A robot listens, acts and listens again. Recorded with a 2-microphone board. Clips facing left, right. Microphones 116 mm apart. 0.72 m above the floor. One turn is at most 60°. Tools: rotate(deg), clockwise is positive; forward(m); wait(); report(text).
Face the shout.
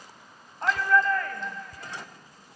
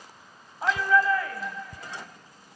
rotate(30)
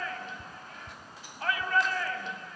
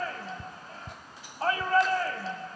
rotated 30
rotate(60)
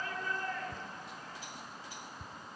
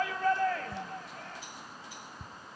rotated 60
rotate(60)
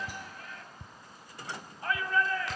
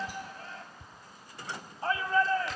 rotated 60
rotate(30)
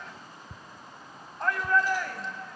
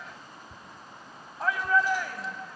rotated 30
report("Facing the shout, over 4 m away.")